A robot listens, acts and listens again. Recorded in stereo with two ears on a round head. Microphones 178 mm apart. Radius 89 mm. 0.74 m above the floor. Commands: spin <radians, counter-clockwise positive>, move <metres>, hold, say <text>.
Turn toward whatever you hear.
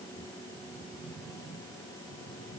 hold
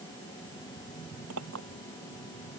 spin -1.57
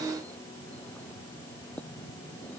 hold
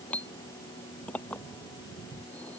say Facing the clink.